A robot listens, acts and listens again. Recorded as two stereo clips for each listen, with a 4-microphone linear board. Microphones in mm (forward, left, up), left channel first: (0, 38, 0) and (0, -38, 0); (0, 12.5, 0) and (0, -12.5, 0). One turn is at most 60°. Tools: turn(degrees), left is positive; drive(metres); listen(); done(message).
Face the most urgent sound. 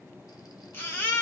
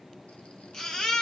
turn(degrees=30)
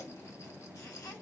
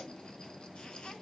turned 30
listen()
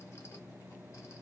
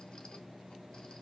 listen()
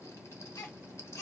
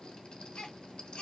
turn(degrees=60)
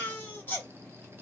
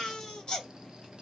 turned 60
turn(degrees=35)
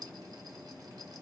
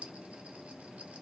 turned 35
listen()
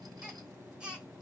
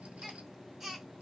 turn(degrees=-15)
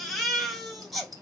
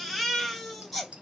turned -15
done("Found it: a baby crying, straight ahead.")